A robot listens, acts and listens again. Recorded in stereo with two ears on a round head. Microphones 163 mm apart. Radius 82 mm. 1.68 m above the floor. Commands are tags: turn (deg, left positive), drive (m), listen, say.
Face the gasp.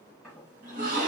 <turn deg="-45"/>
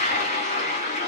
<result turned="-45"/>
<listen/>
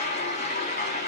<say>I heard a gasp, but can't make it out now. It was about straight ahead or 90° right.</say>